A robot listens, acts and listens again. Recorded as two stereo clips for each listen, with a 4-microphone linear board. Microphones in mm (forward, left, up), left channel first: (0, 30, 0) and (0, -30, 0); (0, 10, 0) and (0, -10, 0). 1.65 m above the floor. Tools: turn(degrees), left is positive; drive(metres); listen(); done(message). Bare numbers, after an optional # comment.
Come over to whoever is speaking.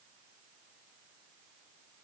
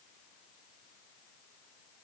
listen()
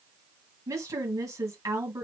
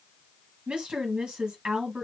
# The woman speaking: about 65° right or 115° right.
turn(-65)
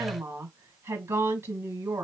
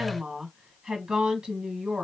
# So it is at 50° right.
turn(-50)
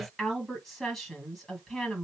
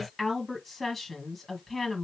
drive(1.0)
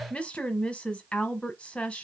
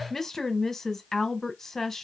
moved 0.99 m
# The woman speaking is now 20° left.
turn(20)
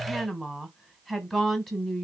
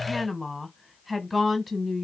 drive(1.0)
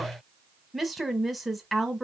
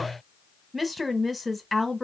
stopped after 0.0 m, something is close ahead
done("I am next to the woman speaking.")